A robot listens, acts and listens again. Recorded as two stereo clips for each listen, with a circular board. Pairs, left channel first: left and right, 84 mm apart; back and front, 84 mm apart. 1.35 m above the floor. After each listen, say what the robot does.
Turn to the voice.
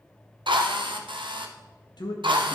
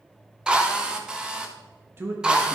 Turn 60° left.
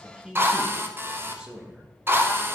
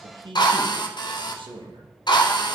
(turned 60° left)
Turn 10° right.
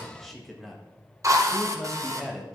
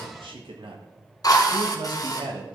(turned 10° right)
Facing the man speaking, 1 to 2 m away.